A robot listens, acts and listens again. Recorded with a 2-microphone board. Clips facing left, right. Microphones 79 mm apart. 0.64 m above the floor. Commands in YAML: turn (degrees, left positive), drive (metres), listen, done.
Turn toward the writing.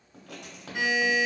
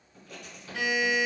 turn: 70
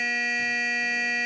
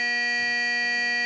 listen: true
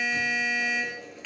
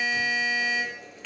done: "Found it: writing, straight ahead, under 1 m away."